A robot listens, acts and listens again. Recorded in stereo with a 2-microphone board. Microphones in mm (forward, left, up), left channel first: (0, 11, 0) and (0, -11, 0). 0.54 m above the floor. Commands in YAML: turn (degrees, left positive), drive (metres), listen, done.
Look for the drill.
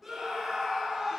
listen: true
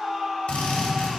turn: 70
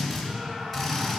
done: "Found it: a drill, straight ahead, 2 to 4 m away."